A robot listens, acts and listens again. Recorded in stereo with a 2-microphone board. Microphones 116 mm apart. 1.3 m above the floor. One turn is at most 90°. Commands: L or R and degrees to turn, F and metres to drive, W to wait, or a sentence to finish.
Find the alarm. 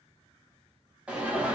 R30
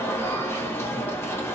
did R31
L20
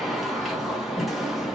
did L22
Found it: an alarm, straight ahead, under 1 m away.